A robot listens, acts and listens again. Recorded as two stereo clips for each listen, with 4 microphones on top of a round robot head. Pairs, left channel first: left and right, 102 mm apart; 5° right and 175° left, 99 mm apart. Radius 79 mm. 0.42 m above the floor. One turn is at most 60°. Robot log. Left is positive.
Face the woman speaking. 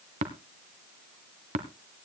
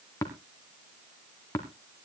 cmd idle
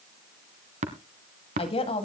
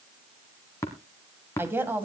note: The woman speaking: 105° left.
cmd yaw +60
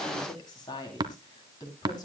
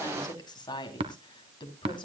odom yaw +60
note: The woman speaking is now 30° left.
cmd yaw +30
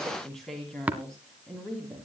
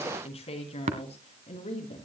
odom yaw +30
end: Found it: a woman speaking, straight ahead.